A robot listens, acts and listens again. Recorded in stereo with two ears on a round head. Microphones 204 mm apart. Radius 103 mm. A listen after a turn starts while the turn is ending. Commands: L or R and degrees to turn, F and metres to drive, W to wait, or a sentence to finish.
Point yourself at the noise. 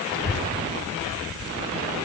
L65
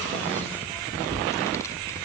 L15
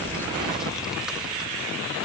Found it: a child speaking, straight ahead.